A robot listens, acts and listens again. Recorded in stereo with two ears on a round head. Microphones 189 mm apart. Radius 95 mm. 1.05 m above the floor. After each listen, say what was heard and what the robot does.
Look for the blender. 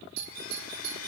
The blender: about 70° left or 110° left. Turn 70° left.
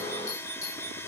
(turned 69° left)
So it is at 10° left. Turn 10° left.
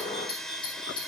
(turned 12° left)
Facing the blender.